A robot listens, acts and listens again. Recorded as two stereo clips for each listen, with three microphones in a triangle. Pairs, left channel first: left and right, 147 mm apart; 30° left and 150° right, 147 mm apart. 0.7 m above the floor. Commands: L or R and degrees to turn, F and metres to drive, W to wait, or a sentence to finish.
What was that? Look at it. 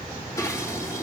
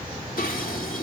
L20
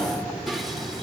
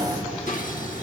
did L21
Facing the dishes clattering, 1 to 2 m away.